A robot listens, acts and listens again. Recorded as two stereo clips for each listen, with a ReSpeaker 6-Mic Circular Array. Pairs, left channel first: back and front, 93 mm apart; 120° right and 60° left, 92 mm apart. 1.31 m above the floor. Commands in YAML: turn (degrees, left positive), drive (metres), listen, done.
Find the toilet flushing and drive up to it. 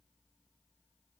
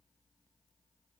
listen: true
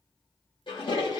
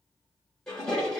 turn: 155
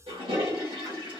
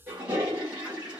turn: -10
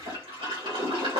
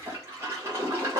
drive: 1.0
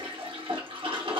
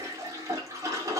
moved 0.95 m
drive: 1.0
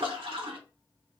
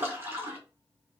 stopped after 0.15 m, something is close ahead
done: "Arrived at the toilet flushing, straight ahead."